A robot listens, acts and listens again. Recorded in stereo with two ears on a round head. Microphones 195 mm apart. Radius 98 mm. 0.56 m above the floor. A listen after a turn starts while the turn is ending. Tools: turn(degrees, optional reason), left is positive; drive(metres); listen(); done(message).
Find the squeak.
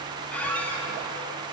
turn(degrees=30)
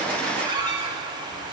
turn(degrees=-20, reason="So it is at 20° right.")
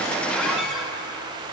done("Found it: a squeak, straight ahead.")